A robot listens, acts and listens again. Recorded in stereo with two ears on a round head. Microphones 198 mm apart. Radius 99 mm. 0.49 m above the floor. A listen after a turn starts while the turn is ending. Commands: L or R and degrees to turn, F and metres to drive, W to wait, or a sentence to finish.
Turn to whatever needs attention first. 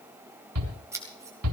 R90
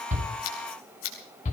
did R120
L35
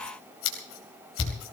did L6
L30
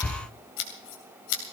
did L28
W
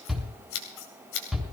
Found it: a shout, straight ahead.